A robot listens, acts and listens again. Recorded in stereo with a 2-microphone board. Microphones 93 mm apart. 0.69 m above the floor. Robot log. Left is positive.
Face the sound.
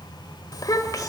note: The child speaking: about 40° left or 140° left.
cmd yaw +40
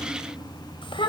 note: So it is at 110° left.
cmd yaw +110
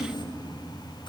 note: The child speaking is now 55° left.
cmd yaw +55
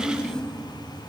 note: The child speaking is now 10° left.
cmd yaw +10
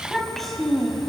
end: Found it: a child speaking, straight ahead, 2 to 4 m away.